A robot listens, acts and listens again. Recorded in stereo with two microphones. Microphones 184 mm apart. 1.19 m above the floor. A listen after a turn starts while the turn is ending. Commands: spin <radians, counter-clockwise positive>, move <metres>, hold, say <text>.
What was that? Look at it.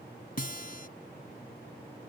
spin 0.96
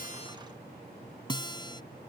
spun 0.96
spin 0.52
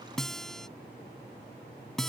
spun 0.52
say Facing the guitar.